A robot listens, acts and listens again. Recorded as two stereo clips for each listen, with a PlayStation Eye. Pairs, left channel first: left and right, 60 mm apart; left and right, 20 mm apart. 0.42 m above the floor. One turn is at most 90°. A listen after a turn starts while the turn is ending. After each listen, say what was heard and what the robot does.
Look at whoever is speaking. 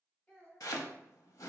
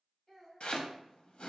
The child speaking: about 20° left or 160° left. Turn 20° left.
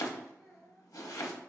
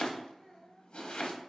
Facing the child speaking, 1 to 2 m away.